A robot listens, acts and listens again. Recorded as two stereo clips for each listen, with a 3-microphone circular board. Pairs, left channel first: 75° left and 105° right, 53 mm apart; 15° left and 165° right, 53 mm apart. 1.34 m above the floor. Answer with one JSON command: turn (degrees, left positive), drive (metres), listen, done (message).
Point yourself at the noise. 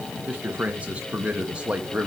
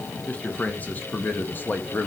{"turn": -35}
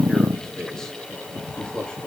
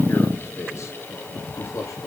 {"done": "Found it: a man speaking, straight ahead, 2 to 4 m away."}